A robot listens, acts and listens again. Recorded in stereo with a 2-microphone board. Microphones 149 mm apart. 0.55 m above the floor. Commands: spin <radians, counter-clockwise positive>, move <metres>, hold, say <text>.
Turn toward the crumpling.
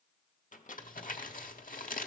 spin 1.13
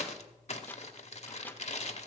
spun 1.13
spin 0.79
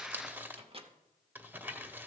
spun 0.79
spin -0.17
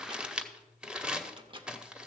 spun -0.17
say Found it: crumpling, straight ahead, under 1 m away.